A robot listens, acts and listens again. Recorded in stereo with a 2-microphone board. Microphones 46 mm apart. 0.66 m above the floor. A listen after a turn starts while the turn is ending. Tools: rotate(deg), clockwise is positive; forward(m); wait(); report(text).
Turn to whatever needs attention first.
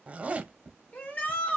rotate(-40)
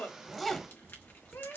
rotate(-100)
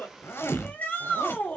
rotate(-35)
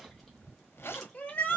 rotate(-35)
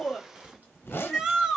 rotate(10)
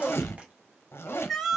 report("Found it: a shout, straight ahead.")